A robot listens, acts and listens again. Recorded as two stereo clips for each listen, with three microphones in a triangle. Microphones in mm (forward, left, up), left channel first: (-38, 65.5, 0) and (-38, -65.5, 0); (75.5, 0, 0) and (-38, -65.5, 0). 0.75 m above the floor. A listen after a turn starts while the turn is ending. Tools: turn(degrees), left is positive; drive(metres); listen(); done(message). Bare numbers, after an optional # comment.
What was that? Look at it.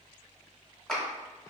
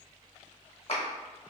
done("Facing the clap.")